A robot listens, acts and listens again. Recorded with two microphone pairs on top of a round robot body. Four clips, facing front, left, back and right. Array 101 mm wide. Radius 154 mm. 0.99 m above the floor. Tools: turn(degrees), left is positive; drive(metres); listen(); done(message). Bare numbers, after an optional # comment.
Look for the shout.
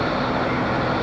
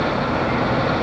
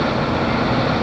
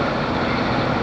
listen()
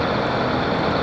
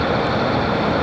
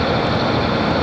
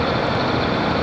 listen()
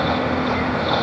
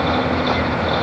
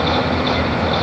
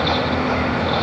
done("I can't make out a shout.")